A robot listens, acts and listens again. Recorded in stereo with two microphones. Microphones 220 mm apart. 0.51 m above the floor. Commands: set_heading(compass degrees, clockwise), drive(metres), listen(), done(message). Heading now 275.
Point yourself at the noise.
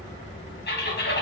set_heading(225)
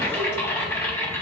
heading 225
set_heading(210)
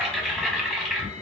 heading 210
done("Found it: typing on a keyboard, straight ahead, 1 to 2 m away.")